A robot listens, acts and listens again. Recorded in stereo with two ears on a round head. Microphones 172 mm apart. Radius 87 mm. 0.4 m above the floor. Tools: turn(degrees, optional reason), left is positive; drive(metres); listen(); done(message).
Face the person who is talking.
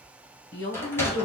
turn(degrees=65, reason="The woman speaking: about 65° left or 115° left.")
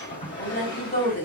turn(degrees=45, reason="So it is at 45° left.")
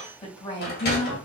turn(degrees=30, reason="The woman speaking is now 30° left.")
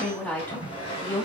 turn(degrees=10, reason="The woman speaking is now 10° left.")
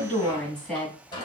done("Found it: a woman speaking, straight ahead.")